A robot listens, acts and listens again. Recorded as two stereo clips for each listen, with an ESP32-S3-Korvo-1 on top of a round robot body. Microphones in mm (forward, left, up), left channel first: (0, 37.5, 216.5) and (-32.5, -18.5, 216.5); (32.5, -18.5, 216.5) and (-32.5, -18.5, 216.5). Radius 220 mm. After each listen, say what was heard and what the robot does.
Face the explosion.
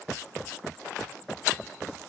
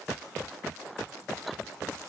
Keep listening.
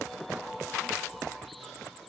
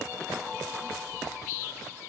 Keep listening.
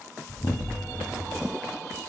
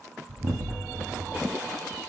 The explosion: 110° left. Turn 110° left.
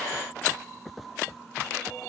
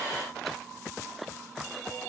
I heard an explosion from this way, but can't make it out now.